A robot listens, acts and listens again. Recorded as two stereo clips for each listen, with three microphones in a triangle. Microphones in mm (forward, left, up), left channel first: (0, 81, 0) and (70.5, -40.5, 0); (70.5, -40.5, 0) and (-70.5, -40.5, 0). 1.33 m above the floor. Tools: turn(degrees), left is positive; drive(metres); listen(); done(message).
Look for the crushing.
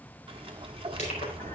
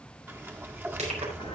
turn(degrees=150)
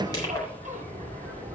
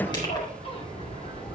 turn(degrees=60)
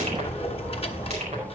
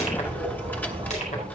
listen()
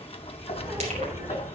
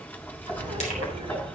listen()
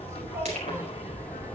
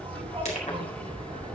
turn(degrees=-30)
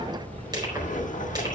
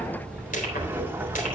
done("Found it: crushing, straight ahead, over 4 m away.")